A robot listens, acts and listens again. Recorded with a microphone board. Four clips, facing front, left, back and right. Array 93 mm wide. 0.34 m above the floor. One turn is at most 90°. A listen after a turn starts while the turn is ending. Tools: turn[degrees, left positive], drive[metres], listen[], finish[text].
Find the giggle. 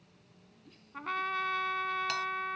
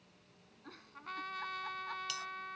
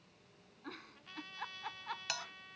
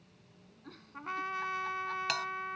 Thought: The giggle: 175° left.
Action: turn[90]
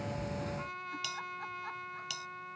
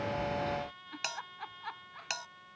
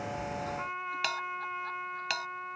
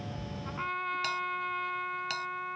Thought: Nothing new. It was at 85° left.
Action: turn[85]
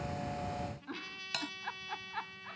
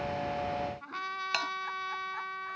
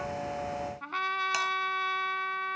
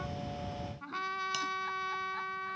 Action: listen[]
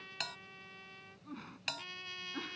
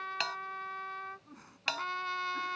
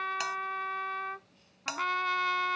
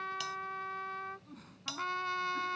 Thought: The giggle is now 20° left.
Action: turn[20]
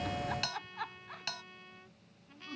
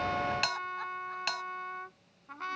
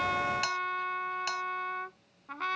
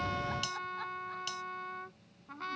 Action: listen[]
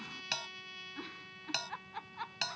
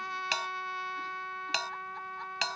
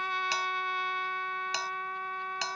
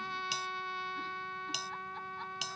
Action: listen[]
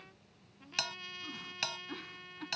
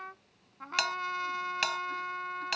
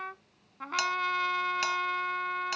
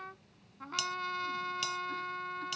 Action: finish[I heard a giggle from this way, but can't make it out now.]